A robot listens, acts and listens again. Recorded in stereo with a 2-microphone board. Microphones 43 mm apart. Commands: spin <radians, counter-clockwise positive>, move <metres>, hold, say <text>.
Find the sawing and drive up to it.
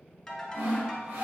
spin -1.05
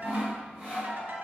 spin -0.35
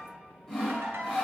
move 1.0
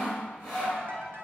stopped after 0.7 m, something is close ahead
spin 0.17
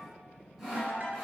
say I am next to the sawing.